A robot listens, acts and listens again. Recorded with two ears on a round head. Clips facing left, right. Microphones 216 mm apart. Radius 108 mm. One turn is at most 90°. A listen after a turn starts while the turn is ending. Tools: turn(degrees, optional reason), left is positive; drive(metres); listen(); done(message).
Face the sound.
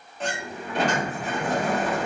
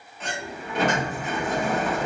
turn(degrees=30, reason="The sliding door: about 30° left or 150° left.")
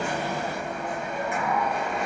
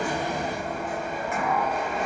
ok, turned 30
done("Facing the sliding door, under 1 m away.")